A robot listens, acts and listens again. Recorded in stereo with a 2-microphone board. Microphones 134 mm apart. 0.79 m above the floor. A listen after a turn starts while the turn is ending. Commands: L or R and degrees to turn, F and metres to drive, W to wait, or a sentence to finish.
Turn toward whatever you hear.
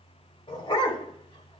L35
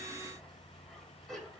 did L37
Found it: a dog barking, straight ahead, 1 to 2 m away.